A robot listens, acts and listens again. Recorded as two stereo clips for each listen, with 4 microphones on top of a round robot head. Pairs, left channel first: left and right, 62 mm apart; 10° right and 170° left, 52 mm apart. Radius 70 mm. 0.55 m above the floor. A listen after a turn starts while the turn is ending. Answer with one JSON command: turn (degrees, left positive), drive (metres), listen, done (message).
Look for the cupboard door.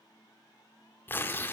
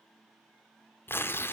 {"listen": true}
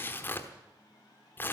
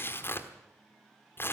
{"listen": true}
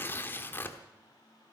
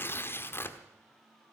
{"done": "I can't make out a cupboard door, only tearing paper."}